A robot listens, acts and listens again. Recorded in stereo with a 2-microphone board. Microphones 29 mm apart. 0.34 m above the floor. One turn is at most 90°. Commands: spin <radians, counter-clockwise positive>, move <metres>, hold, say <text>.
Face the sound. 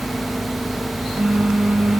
spin -1.57
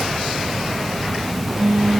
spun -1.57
spin -0.26
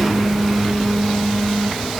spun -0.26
say Found it: a phone buzzing, straight ahead, 2 to 4 m away.